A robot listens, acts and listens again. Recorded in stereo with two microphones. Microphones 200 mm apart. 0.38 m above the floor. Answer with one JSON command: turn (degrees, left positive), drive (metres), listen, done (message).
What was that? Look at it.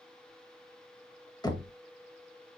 {"turn": 20}
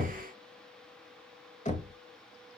{"turn": 135}
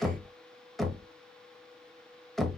{"done": "Found it: knocking, straight ahead."}